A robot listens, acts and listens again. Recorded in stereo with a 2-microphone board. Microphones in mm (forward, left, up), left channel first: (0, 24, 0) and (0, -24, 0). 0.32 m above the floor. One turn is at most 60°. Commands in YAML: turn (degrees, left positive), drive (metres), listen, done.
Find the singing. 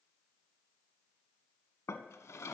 listen: true
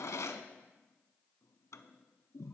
listen: true
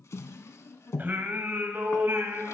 turn: -60
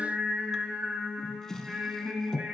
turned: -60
turn: -20
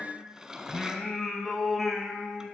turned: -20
done: "Facing the singing."